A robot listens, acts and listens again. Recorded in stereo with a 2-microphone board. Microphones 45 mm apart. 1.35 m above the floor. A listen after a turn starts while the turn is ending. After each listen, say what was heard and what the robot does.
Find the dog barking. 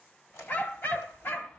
The dog barking: about 60° left or 120° left. Turn 60° left.
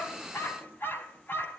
So it is at 45° left. Turn 45° left.
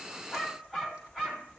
Found it: a dog barking, straight ahead, over 4 m away.